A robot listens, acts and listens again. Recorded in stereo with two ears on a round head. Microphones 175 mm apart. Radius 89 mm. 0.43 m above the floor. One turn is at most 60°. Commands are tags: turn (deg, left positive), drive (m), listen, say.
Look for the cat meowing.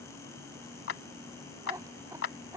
<turn deg="-15"/>
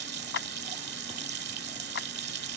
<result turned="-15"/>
<listen/>
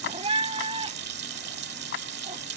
<turn deg="-60"/>
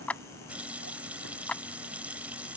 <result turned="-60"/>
<turn deg="-60"/>
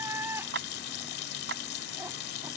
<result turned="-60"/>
<turn deg="-15"/>
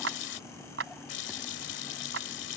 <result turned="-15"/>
<listen/>
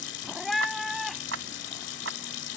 <say>Facing the cat meowing.</say>